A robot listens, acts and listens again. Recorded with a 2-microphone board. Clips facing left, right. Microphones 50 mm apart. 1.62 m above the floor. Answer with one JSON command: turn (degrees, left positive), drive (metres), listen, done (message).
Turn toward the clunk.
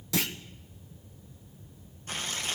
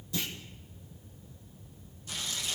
{"turn": 90}
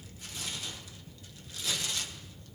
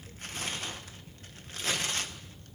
{"done": "Facing where the clunk came from. I can't hear it now."}